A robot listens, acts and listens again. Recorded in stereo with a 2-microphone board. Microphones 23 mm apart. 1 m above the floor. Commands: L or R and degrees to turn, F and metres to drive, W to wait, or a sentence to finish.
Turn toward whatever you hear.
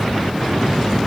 W
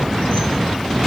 W
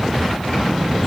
I can't make out anything to turn to.